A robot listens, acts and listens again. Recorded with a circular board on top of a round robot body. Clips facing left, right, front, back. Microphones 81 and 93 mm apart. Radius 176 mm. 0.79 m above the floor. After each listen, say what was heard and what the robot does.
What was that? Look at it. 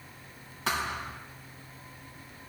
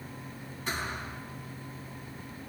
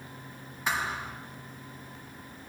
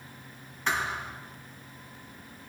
The thud: 80° left. Turn 80° left.
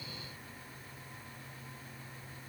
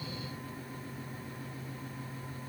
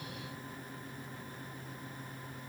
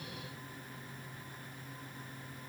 I heard a thud from this way, but can't make it out now.